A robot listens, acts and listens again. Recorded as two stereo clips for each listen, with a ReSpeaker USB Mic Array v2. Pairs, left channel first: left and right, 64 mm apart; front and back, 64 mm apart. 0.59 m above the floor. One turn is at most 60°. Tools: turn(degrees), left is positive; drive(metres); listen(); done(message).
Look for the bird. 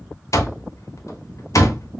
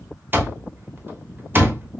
listen()
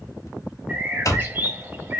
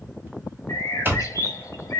turn(degrees=-30)
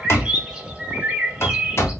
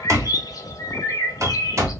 turn(degrees=-15)
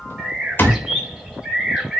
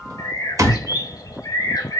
done("Found it: a bird, straight ahead, 1 to 2 m away.")